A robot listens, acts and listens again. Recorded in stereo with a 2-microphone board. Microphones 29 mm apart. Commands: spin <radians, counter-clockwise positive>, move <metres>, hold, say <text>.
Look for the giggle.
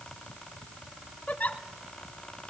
spin 1.13
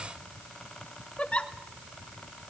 spin 0.79
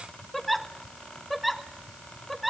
say Facing the giggle.